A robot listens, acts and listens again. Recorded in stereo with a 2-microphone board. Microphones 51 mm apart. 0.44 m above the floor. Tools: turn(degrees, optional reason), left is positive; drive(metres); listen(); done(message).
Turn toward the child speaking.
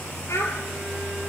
turn(degrees=65, reason="The child speaking: about 65° left or 115° left.")
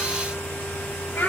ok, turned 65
turn(degrees=50, reason="So it is at 50° left.")
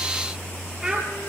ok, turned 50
turn(degrees=-10, reason="The child speaking is now 10° right.")
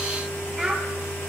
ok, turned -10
done("Facing the child speaking.")